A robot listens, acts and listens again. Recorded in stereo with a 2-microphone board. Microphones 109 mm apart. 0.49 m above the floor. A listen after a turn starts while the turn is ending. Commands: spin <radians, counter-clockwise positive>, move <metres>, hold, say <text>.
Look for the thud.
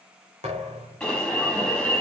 spin -1.57
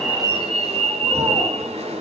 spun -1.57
say Facing where the thud came from. I can't hear it now.